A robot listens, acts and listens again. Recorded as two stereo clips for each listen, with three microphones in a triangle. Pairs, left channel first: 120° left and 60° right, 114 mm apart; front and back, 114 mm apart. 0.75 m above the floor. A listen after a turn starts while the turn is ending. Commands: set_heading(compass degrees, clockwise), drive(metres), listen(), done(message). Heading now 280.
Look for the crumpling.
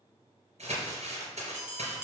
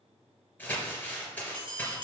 set_heading(0)
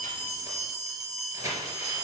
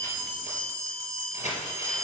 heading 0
done("Facing the crumpling.")